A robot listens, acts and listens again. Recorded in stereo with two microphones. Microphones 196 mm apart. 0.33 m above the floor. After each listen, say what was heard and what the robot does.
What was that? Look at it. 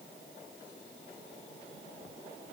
Keep listening.
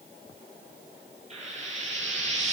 The frying: about 35° right or 145° right. Turn 35° right.
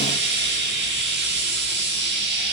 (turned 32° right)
So it is at 115° right. Turn 115° right.
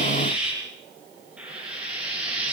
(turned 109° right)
Facing the frying.